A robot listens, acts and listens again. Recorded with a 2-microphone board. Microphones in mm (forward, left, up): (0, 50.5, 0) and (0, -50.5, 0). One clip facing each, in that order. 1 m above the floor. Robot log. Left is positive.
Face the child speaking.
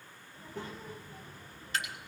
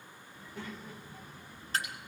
note: The child speaking: about 45° left or 135° left.
cmd yaw +45
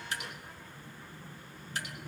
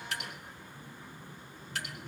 note: So it is at 10° left.
cmd yaw +10
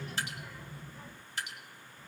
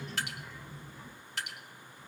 note: The child speaking is now 10° left.
cmd yaw +10
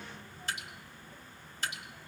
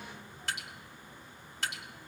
end: Facing the child speaking, over 4 m away.